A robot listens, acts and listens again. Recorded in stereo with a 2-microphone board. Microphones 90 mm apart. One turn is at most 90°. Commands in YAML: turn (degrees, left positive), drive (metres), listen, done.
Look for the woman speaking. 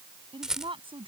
turn: -75
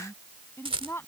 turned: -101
turn: 25
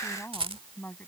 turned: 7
turn: 20
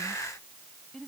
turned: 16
done: "Found it: a woman speaking, straight ahead."